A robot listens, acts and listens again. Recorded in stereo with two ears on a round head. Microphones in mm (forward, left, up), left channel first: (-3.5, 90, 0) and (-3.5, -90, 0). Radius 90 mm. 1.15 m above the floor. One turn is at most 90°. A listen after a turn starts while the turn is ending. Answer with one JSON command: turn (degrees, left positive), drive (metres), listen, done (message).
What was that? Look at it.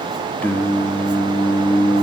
{"turn": 30}
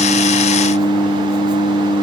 {"turn": 90}
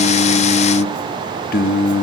{"turn": 60}
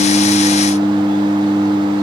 {"turn": 15}
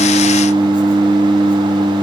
{"done": "Found it: singing, straight ahead, under 1 m away."}